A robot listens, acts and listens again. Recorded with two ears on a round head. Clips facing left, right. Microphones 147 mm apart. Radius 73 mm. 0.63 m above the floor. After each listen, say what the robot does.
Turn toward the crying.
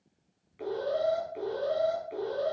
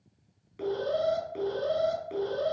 Keep listening.
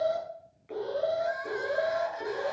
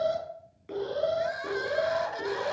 Turn 75° right.
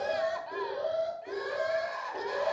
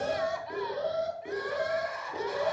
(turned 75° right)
Facing the crying.